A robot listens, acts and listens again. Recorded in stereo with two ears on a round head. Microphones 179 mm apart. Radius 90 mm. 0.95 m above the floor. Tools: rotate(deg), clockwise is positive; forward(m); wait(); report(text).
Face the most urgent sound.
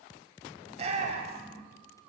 rotate(35)
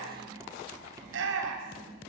rotate(115)
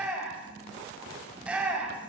report("Found it: a shout, straight ahead.")